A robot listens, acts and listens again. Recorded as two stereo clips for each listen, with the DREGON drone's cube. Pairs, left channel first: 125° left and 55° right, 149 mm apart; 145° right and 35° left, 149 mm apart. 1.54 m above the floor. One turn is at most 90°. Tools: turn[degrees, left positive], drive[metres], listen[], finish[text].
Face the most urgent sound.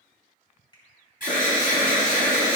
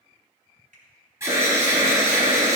Thought: The alarm: 105° left.
Action: turn[90]
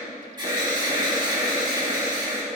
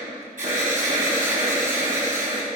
Action: finish[Facing the alarm, 2 to 4 m away.]